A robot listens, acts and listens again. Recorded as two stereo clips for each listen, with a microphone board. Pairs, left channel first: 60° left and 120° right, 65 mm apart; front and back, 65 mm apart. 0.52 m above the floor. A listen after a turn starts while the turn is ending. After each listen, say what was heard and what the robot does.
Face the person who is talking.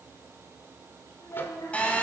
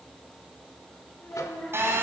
The child speaking: 65° left. Turn 65° left.
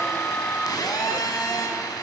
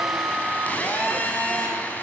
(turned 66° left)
Keep listening.
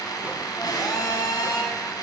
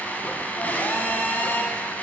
Keep listening.
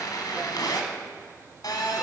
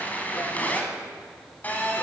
I heard a child speaking from this way, but can't make it out now.